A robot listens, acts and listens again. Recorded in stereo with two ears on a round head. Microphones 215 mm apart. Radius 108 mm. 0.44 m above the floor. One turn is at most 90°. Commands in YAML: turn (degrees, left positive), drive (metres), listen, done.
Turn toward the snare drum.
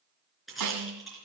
turn: -90
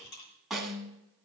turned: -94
done: "Found it: a snare drum, straight ahead, 1 to 2 m away."